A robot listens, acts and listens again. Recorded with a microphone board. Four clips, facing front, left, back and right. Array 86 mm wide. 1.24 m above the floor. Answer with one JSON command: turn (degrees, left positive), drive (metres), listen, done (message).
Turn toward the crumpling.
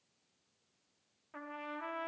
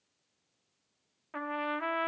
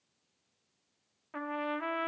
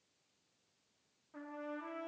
{"listen": true}
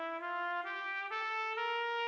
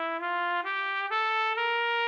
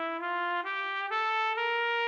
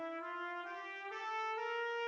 {"listen": true}
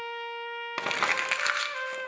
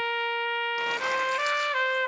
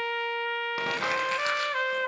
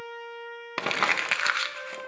{"turn": -70}
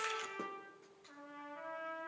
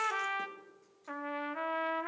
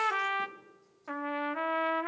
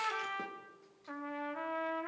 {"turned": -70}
{"listen": true}
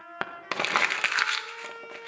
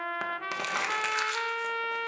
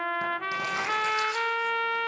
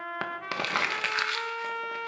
{"turn": -15}
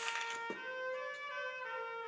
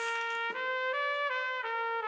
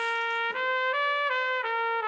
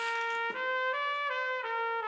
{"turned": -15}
{"listen": true}
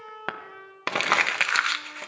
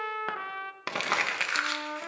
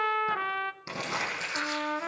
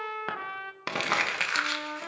{"done": "Found it: crumpling, straight ahead."}